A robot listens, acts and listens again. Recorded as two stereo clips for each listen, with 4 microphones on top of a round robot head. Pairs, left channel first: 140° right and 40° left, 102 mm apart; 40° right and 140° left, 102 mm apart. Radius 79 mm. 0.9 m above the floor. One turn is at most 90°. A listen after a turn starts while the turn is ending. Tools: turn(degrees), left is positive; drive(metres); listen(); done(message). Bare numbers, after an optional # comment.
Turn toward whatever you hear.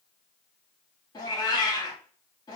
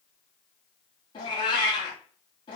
# The cat meowing: 85° right.
turn(-85)
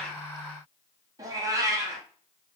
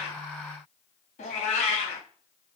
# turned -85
# The cat meowing is now 20° right.
turn(-20)
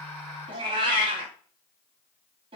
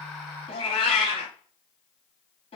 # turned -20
done("Found it: a cat meowing, straight ahead, under 1 m away.")